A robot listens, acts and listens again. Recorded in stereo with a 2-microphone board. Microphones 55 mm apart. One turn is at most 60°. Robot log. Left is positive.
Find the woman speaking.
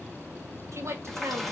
note: The woman speaking: about 60° right or 120° right.
cmd yaw -60
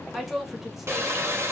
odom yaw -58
end: Found it: a woman speaking, straight ahead.